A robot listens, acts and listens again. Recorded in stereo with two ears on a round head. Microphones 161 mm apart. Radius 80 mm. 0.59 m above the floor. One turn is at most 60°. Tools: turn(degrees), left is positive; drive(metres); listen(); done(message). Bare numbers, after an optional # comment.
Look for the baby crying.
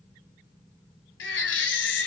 turn(60)
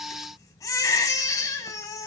# So it is at 20° left.
turn(20)
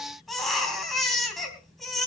done("Facing the baby crying, 2 to 4 m away.")